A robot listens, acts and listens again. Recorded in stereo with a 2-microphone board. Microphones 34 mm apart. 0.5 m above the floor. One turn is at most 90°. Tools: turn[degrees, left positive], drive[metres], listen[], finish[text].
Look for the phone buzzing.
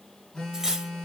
Action: turn[30]
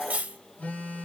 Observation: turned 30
Thought: So it is at 135° left.
Action: turn[90]
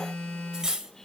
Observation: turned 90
Thought: The phone buzzing is now 25° left.
Action: turn[25]
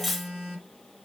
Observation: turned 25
Action: finish[Facing the phone buzzing.]